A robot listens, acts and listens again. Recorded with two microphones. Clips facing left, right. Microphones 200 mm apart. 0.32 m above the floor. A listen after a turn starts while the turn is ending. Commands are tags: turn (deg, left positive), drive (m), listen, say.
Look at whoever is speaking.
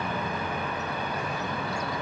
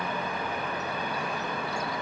<listen/>
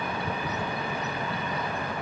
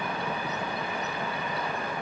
<listen/>
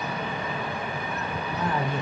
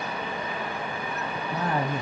<turn deg="-45"/>
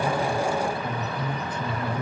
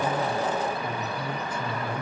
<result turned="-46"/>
<turn deg="-10"/>
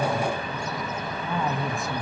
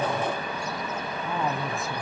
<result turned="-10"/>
<say>Facing the woman speaking, 1 to 2 m away.</say>